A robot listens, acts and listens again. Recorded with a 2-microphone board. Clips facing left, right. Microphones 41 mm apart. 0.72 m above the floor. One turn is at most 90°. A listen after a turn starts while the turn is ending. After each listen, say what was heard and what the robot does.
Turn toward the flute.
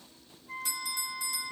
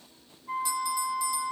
The flute: about 70° right or 110° right. Turn 70° right.
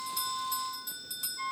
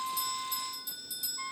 Facing the flute.